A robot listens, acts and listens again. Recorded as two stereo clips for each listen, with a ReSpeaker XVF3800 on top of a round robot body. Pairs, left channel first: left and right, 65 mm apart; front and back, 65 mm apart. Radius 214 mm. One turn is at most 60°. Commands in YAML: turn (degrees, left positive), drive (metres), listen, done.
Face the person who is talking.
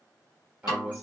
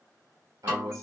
turn: -60
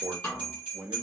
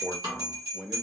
turn: -60
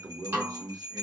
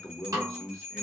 turn: -60
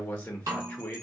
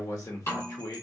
turn: 20
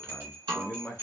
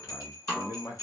done: "Found it: a man speaking, straight ahead, 1 to 2 m away."